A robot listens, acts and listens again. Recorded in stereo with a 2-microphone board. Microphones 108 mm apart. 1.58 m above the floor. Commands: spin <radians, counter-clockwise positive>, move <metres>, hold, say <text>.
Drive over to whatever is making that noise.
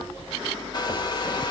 spin 0.70
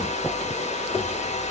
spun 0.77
spin 1.75
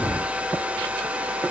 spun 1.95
spin -0.17
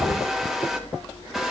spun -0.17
move 1.0
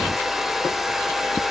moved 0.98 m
move 1.0
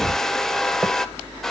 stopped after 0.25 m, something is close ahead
say I am next to the hair dryer.